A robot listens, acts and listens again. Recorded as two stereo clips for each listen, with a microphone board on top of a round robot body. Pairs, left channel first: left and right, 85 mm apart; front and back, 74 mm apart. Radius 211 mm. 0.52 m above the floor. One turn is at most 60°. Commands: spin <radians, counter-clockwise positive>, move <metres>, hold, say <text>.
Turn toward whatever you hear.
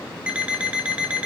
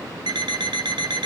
spin -1.05
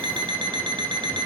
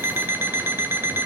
spin -1.05
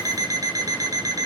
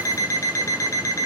spin -0.79
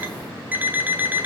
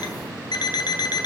spin -0.35
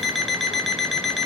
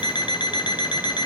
say Facing the alarm clock, 2 to 4 m away.